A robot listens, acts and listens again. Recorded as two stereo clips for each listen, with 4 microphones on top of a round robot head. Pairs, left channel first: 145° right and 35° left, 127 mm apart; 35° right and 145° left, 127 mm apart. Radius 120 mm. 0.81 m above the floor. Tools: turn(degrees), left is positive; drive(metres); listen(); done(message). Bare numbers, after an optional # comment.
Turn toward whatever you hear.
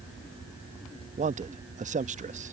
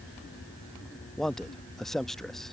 # The man speaking: 50° left.
turn(50)
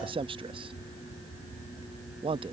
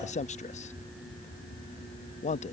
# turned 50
# The man speaking is now 10° right.
turn(-10)
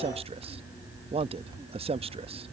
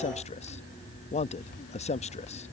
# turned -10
done("Facing the man speaking.")